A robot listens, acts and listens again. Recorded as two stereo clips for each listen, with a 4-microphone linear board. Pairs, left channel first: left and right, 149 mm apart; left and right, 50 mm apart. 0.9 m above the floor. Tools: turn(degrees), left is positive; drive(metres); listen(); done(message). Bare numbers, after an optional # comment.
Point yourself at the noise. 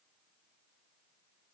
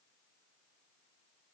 listen()
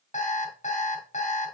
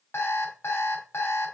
# The alarm clock: about 55° left or 125° left.
turn(55)
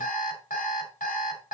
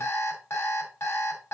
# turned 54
# So it is at 70° left.
turn(70)
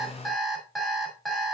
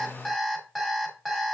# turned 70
done("Found it: an alarm clock, straight ahead.")